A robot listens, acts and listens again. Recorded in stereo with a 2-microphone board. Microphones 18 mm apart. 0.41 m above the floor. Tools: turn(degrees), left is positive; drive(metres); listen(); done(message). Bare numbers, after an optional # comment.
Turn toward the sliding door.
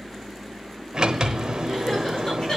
# The sliding door: about 50° right or 130° right.
turn(-50)
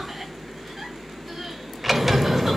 # So it is at 10° right.
turn(-10)
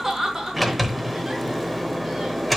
done("Found it: a sliding door, straight ahead.")